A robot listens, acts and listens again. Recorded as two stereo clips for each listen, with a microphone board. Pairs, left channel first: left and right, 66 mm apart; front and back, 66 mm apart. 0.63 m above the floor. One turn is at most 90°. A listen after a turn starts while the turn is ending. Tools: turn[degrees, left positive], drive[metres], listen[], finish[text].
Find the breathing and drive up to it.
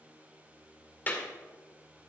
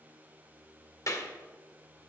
Action: listen[]
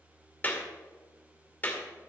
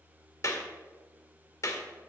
Action: listen[]
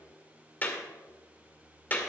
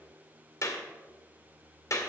Action: finish[I can't make out breathing, only a clap.]